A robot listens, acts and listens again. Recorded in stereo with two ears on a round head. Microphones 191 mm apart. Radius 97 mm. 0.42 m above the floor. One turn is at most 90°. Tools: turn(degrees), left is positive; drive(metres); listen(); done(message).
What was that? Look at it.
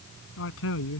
turn(degrees=65)
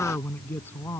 turn(degrees=10)
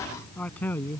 turn(degrees=10)
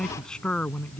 done("Found it: a man speaking, straight ahead.")